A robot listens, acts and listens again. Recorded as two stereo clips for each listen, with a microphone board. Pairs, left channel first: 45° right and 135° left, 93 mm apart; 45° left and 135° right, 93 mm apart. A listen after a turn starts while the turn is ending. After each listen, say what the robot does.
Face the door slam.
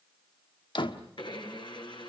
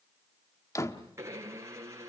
Turn 10° right.
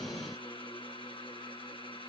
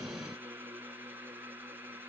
Facing where the door slam came from. I can't hear it now.